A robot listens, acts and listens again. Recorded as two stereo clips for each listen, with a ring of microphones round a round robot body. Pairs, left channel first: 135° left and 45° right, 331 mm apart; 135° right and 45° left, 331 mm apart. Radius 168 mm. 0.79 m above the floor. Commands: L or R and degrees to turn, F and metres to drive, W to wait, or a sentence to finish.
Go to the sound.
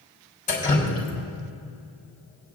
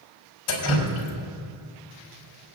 R160
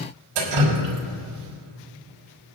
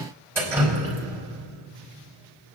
R40
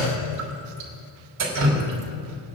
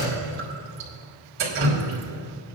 R10
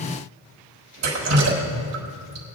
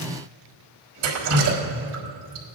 F1.0
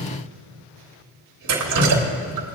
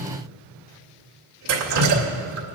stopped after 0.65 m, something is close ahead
Something is in my way. I am facing the dripping but have not reached it.